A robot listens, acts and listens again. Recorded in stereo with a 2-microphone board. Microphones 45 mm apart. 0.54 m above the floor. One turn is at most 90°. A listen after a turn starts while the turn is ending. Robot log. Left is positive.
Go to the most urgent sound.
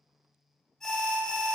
cmd yaw +30
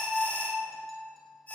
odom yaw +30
note: So it is at 140° left.
cmd yaw +90
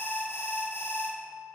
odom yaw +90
note: The alarm is now 70° left.
cmd yaw +70
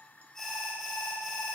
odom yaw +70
cmd fwd 1.0
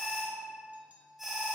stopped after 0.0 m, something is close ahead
end: Blocked. The alarm is further on, straight ahead.